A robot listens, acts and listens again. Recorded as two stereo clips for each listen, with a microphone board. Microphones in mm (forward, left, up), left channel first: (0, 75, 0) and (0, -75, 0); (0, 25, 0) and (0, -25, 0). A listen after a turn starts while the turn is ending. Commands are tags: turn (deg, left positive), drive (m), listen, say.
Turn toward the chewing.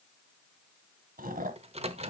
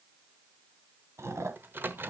<turn deg="-70"/>
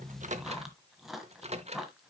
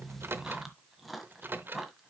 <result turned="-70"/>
<say>Found it: chewing, straight ahead, 1 to 2 m away.</say>